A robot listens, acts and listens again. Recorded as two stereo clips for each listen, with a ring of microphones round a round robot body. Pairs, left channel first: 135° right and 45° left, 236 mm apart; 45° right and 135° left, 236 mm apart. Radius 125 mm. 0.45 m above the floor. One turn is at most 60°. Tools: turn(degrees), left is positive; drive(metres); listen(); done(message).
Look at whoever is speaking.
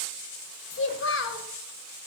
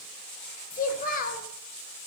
turn(degrees=-60)
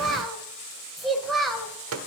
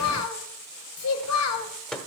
turn(degrees=-45)
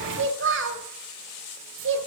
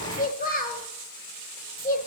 turn(degrees=10)
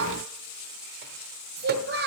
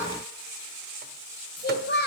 done("Facing the child speaking, 2 to 4 m away.")